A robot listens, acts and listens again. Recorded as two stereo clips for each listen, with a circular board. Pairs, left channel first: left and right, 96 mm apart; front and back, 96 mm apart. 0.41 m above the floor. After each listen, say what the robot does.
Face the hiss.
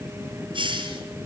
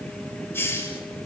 Turn 60° right.
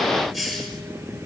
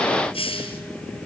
Facing the hiss, over 4 m away.